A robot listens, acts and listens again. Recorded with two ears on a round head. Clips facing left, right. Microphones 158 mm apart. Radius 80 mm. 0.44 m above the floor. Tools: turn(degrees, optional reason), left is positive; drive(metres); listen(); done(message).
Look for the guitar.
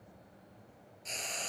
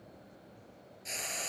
listen()
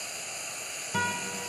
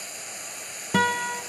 turn(degrees=-75, reason="The guitar: about 75° right or 105° right.")
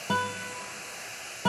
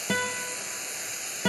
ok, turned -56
turn(degrees=-25, reason="So it is at 25° right.")
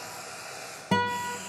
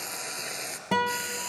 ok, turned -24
done("Facing the guitar, 1 to 2 m away.")